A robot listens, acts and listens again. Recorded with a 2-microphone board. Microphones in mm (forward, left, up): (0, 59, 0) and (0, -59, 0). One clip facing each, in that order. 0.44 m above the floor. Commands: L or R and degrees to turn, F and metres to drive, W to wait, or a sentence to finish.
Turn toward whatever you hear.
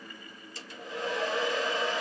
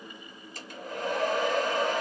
R55
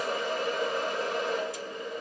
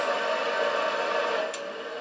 R70
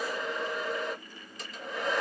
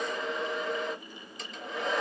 Facing the hair dryer.